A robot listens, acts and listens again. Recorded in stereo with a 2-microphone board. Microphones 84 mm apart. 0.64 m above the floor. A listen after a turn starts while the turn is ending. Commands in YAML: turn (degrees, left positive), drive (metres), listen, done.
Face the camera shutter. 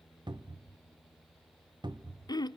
listen: true
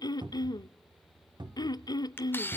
turn: 25
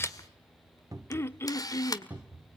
turn: 130
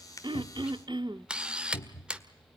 turn: -10
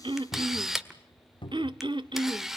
done: "Found it: a camera shutter, straight ahead."